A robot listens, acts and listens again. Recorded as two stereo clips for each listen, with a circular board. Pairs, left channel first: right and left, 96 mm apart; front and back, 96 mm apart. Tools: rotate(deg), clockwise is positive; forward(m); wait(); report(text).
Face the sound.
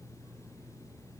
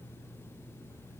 wait()
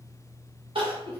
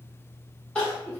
rotate(-80)
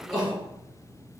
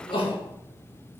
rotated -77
report("Found it: crying, straight ahead.")